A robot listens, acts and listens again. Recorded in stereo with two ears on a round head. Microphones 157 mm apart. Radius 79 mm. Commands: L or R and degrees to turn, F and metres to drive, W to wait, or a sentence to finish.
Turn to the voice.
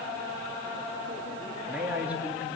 R30
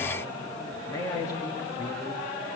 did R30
L20
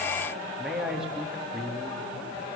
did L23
Found it: a man speaking, straight ahead.